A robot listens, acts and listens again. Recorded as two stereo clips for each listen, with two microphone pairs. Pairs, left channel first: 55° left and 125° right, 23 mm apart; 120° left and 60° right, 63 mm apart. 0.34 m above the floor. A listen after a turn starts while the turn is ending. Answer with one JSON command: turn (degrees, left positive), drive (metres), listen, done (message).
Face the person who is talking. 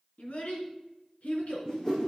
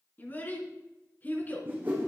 {"turn": 65}
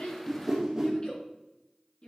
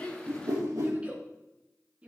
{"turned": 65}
{"turn": 10}
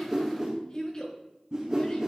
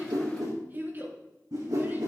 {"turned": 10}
{"done": "Found it: a child speaking, straight ahead, 2 to 4 m away."}